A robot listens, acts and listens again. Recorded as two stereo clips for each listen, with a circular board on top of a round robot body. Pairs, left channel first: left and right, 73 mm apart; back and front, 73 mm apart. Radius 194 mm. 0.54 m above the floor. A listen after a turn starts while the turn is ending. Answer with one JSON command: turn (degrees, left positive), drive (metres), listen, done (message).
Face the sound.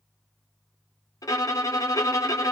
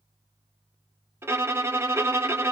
{"turn": 55}
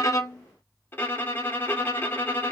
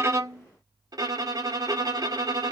{"turn": 30}
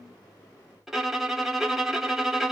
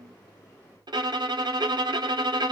{"done": "Facing the violin."}